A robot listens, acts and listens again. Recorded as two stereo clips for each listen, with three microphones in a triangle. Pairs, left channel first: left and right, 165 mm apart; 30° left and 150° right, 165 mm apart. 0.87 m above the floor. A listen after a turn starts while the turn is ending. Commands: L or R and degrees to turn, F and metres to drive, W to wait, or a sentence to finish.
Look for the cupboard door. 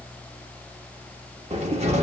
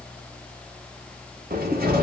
R135
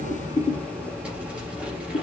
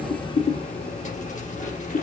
Found it: a cupboard door, straight ahead.